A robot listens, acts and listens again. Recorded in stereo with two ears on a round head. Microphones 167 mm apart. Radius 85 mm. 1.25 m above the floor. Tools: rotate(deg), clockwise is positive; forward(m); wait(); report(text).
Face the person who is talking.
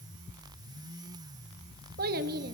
rotate(50)
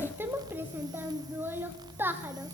rotate(10)
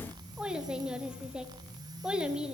report("Found it: a child speaking, straight ahead.")